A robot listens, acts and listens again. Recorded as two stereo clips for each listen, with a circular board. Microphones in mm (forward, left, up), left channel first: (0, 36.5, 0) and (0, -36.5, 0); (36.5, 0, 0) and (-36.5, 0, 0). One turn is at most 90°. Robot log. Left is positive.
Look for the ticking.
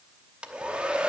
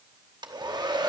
cmd idle
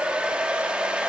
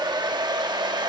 cmd idle
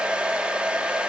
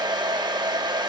end: I can't make out ticking, only a hair dryer.